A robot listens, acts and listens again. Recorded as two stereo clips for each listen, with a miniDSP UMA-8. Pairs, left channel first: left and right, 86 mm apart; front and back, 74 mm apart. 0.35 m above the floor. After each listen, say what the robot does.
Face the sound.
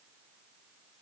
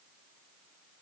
Keep listening.
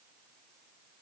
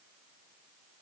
Keep listening.
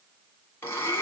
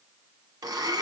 Turn 150° left.
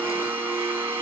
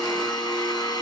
Turn 25° right.
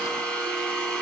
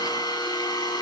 Turn 15° left.
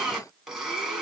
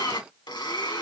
Found it: a blender, straight ahead.